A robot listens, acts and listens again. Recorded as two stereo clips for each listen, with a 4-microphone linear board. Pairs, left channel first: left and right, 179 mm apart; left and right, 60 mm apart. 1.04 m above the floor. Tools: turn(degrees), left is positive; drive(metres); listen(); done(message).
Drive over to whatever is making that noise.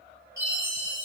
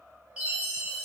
turn(degrees=-15)
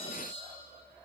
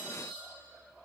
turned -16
drive(metres=1.0)
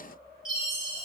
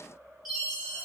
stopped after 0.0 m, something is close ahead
done("Something is in my way. I am facing the chime but have not reached it.")